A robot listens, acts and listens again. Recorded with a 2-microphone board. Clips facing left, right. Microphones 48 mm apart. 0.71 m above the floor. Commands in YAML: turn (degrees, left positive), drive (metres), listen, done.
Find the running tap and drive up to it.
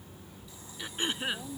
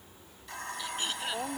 turn: -70
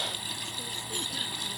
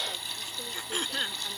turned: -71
drive: 1.0
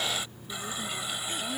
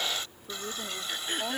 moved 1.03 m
turn: 15
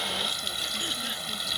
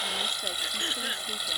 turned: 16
drive: 1.0
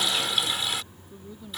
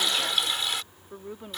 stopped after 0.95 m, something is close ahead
done: "Arrived at the running tap, straight ahead."